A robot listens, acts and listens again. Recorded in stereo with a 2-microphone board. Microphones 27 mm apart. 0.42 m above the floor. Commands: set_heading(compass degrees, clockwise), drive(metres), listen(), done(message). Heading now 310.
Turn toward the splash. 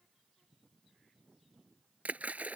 set_heading(15)
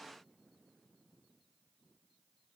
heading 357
listen()
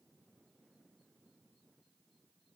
done("I heard a splash, but can't make it out now. It was about 20° right or 65° right.")